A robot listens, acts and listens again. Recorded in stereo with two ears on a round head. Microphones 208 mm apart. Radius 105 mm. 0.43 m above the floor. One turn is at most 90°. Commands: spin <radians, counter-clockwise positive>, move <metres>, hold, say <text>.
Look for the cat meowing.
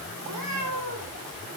spin -1.57
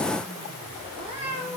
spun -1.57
spin -0.44
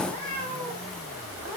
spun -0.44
say Found it: a cat meowing, straight ahead, over 4 m away.